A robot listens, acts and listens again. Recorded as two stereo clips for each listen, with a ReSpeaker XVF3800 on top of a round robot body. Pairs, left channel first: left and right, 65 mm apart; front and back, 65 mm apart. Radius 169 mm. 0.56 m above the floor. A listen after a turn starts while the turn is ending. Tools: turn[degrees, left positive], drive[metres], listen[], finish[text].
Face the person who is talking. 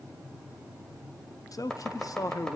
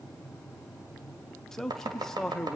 Thought: The man speaking: 85° left.
Action: turn[85]
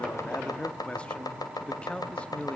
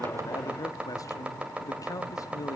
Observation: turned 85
Thought: The man speaking is now 20° left.
Action: turn[20]
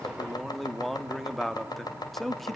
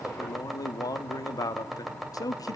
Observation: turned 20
Action: finish[Facing the man speaking, 1 to 2 m away.]